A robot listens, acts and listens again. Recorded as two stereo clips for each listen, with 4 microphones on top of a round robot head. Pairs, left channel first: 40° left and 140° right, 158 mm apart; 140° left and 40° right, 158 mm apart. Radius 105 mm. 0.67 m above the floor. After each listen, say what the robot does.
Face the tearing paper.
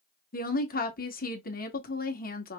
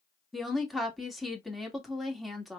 Keep listening.
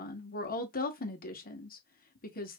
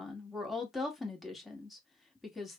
Keep listening.
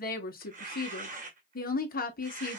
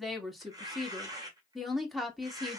Turn 105° right.
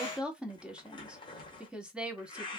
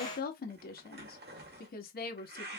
Turn 25° right.
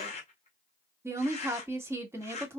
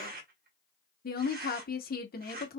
Turn 10° right.
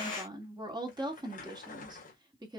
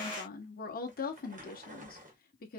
Facing the tearing paper.